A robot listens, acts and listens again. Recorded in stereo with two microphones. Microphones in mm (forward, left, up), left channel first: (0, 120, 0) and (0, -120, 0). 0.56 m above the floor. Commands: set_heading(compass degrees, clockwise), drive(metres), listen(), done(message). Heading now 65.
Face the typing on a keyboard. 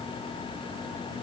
listen()
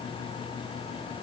listen()
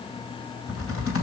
set_heading(0)
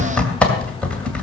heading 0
done("Facing the typing on a keyboard.")